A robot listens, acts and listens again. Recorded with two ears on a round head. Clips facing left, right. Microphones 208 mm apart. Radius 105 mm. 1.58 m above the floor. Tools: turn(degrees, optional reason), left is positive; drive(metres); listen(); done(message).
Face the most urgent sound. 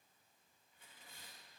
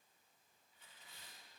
listen()
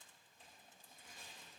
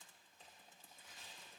listen()
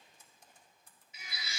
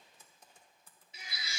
turn(degrees=-30, reason="The baby crying: about 30° right or 150° right.")
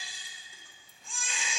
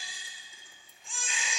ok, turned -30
done("Found it: a baby crying, straight ahead, 2 to 4 m away.")